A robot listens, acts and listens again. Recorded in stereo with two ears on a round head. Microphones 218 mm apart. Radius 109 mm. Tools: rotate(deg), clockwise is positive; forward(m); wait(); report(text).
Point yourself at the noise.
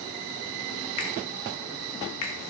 rotate(-70)
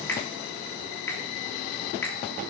rotate(-10)
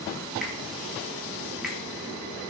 wait()
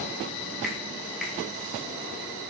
report("Facing the finger snap, 2 to 4 m away.")